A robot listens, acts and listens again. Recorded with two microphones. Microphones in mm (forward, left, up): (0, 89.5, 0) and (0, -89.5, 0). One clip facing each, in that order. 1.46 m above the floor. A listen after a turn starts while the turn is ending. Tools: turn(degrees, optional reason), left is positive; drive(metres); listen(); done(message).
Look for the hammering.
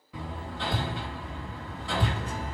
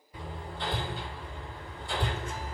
turn(degrees=90)
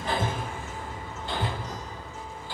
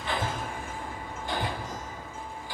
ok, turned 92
turn(degrees=-15, reason="So it is at 15° right.")
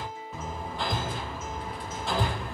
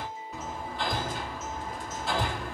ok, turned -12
done("Facing the hammering.")